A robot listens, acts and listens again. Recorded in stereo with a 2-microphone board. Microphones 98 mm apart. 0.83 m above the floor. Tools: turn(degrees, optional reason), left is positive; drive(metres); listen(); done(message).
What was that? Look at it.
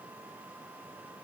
listen()
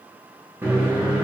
turn(degrees=-20, reason="The microwave: about 20° right or 160° right.")
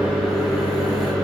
done("Facing the microwave, under 1 m away.")